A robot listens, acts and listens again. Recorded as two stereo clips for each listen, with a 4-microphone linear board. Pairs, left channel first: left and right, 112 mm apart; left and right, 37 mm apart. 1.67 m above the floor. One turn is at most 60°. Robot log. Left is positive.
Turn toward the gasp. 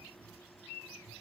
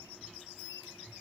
cmd idle
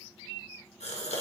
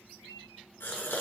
cmd yaw +60
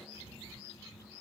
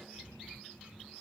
note: Nothing new. It was at 30° left.
cmd yaw +30
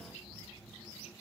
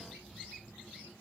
end: Facing where the gasp came from. I can't hear it now.